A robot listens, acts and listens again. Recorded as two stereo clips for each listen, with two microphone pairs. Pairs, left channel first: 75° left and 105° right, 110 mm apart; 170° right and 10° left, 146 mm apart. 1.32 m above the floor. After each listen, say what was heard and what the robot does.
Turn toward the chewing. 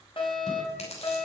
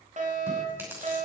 The chewing: 85° left. Turn 85° left.
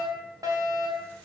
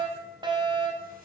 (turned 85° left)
Keep listening.
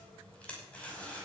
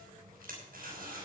Found it: chewing, straight ahead, over 4 m away.